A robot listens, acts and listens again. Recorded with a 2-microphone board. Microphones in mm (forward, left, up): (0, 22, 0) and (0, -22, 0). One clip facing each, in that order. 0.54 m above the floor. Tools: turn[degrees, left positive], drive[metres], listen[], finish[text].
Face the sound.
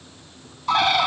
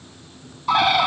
Action: turn[-30]
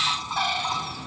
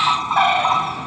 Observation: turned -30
Thought: So it is at 140° right.
Action: turn[-140]
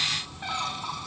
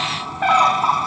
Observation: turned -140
Thought: The bird is now 50° right.
Action: turn[-50]
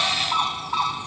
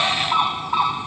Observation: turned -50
Thought: The bird is now 10° right.
Action: turn[-10]
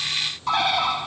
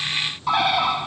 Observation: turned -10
Action: finish[Found it: a bird, straight ahead.]